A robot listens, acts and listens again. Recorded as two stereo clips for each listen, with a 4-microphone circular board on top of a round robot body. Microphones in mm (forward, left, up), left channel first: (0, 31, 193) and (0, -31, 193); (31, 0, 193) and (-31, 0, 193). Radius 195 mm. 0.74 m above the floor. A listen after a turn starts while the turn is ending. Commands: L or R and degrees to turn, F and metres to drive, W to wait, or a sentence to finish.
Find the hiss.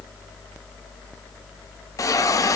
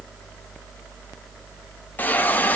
L60
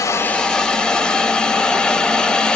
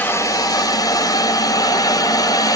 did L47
L15
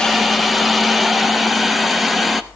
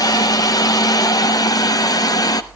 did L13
Facing the hiss.